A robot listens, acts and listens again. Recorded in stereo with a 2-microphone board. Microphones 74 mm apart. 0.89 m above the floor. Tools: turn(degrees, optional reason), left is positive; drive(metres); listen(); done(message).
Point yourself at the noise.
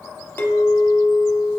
turn(degrees=25, reason="The clink: about 25° left or 155° left.")
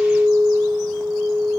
done("Found it: a clink, straight ahead, 1 to 2 m away.")